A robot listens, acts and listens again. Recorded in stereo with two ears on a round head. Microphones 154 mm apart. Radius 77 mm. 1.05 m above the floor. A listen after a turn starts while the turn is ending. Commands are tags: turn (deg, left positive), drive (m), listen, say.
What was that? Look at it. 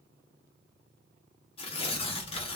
<turn deg="35"/>
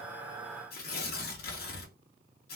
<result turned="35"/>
<turn deg="105"/>
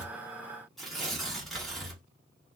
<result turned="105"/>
<say>Found it: tearing paper, straight ahead.</say>